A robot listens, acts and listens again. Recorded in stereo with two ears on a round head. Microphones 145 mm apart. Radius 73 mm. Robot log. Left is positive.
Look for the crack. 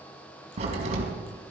note: The crack: about 40° right or 140° right.
cmd yaw -40
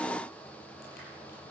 cmd idle
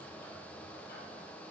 end: I heard a crack, but can't make it out now. It was about straight ahead or 100° right.